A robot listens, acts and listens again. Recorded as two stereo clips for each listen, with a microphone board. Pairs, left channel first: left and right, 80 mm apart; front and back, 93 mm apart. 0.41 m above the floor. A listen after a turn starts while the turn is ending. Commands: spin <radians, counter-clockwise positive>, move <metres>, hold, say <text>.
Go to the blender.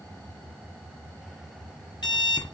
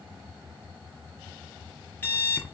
hold
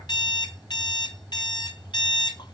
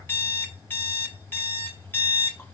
hold
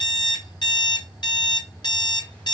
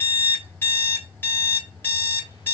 say I can't make out a blender, only an alarm clock.